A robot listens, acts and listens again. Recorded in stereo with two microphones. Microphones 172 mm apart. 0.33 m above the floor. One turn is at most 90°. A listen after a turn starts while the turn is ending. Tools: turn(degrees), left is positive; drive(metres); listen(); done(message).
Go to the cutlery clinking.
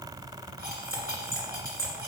turn(degrees=-70)
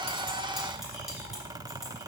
listen()
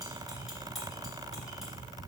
listen()
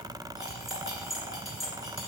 drive(metres=1.0)
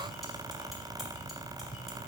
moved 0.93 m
listen()
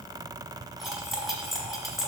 drive(metres=1.0)
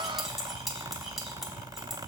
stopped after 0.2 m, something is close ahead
done("I am next to the cutlery clinking.")